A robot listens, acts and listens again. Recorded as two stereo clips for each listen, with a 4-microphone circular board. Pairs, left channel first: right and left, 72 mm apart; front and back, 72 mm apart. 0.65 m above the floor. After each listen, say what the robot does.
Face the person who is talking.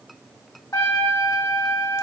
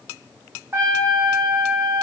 Keep listening.
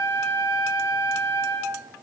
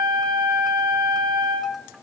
Keep listening.
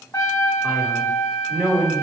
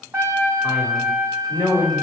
Found it: a man speaking, straight ahead, 1 to 2 m away.